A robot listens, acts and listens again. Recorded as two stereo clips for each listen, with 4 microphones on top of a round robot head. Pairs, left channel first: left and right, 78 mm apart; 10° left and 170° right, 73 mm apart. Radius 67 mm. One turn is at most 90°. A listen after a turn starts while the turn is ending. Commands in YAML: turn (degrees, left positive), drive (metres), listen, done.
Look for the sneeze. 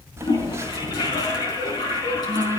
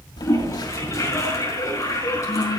listen: true
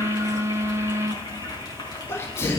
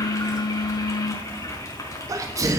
turn: 90
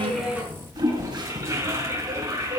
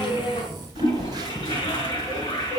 turn: 60
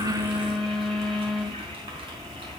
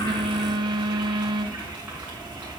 done: "I heard a sneeze from this way, but can't make it out now."